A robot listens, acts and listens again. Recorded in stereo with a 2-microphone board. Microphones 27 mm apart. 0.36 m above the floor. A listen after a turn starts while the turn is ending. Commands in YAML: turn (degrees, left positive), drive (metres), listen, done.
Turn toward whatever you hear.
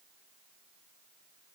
listen: true
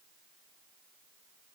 listen: true
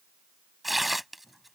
turn: -30
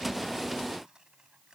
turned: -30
listen: true
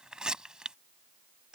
turn: -140
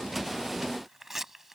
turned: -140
turn: -10
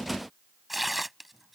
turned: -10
done: "Facing the tearing paper."